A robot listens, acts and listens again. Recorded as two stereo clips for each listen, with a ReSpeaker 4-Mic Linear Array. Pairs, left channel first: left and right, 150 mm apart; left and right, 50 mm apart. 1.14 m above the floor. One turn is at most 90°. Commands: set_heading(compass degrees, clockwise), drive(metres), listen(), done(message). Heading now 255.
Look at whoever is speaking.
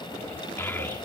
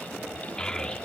set_heading(240)
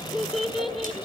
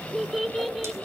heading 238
done("Found it: a child speaking, straight ahead, 1 to 2 m away.")